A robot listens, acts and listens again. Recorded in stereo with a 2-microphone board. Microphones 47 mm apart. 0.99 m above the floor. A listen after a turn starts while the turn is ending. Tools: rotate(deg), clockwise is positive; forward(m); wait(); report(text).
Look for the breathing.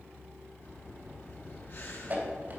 rotate(-55)
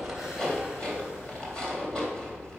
wait()
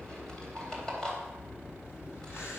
rotate(-70)
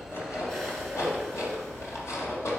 wait()
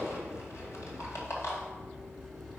report("Found it: breathing, straight ahead.")